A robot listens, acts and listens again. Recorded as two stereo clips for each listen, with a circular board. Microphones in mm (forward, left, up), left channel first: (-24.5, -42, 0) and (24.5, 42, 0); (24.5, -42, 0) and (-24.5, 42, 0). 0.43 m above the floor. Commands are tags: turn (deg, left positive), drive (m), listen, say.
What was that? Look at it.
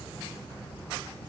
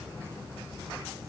<listen/>
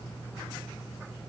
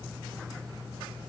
<listen/>
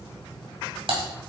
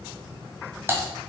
<turn deg="55"/>
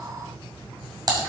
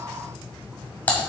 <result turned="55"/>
<turn deg="15"/>
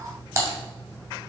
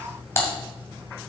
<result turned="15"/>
<say>Found it: typing on a keyboard, straight ahead, 2 to 4 m away.</say>